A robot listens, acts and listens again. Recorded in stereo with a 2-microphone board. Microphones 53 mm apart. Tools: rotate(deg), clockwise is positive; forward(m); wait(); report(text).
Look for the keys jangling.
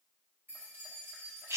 rotate(45)
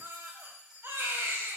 rotate(10)
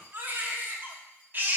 wait()
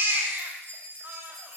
rotate(45)
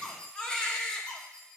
rotate(-10)
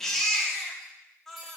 wait()
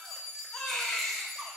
report("Facing the keys jangling.")